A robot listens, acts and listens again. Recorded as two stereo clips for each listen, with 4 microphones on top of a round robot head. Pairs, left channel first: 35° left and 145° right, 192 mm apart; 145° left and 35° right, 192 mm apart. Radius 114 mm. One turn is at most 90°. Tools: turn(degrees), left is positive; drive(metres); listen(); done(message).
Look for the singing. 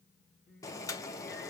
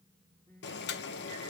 turn(degrees=75)
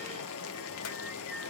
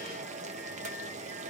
listen()
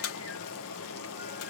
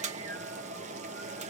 listen()
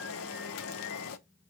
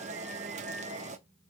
done("Facing where the singing came from. I can't hear it now.")